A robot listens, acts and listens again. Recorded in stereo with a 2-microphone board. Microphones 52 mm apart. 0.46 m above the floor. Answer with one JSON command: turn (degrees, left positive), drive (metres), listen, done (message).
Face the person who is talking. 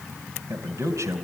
{"turn": -70}
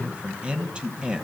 {"turn": -20}
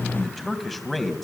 {"done": "Facing the man speaking."}